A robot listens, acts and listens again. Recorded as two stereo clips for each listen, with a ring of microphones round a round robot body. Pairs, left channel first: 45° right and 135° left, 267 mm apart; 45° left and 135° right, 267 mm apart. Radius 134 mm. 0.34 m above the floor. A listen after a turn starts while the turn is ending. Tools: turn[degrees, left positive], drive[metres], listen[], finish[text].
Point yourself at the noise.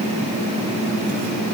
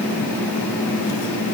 Action: listen[]
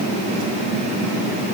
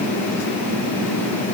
Action: listen[]
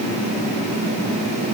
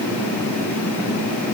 Action: finish[I can't make out anything.]